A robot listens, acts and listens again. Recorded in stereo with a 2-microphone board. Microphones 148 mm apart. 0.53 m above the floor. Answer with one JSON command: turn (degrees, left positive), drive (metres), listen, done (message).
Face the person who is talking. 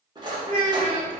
{"turn": -40}
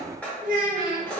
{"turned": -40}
{"turn": -95}
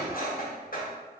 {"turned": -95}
{"listen": true}
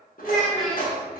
{"done": "Facing the child speaking."}